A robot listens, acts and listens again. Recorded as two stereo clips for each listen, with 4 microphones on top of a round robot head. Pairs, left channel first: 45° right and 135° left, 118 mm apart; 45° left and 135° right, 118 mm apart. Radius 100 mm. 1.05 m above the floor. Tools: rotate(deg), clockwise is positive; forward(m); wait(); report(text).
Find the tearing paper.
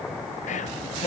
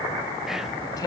wait()
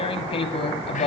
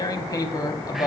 rotate(10)
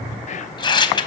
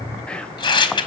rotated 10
report("Found it: tearing paper, straight ahead.")